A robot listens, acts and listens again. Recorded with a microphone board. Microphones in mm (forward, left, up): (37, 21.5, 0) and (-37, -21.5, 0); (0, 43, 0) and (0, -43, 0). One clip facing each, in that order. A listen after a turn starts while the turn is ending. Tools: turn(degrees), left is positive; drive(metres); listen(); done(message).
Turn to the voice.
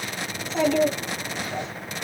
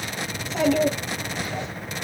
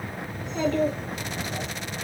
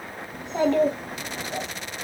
turn(degrees=-50)
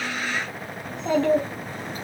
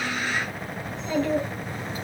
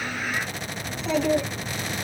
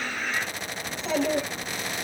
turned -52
done("Facing the child speaking.")